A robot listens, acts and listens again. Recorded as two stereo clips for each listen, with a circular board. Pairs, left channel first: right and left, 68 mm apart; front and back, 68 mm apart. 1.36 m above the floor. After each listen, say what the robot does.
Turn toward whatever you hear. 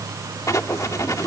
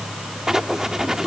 Turn 100° right.
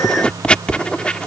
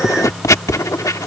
Turn 20° right.
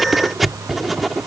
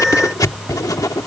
Found it: writing, straight ahead.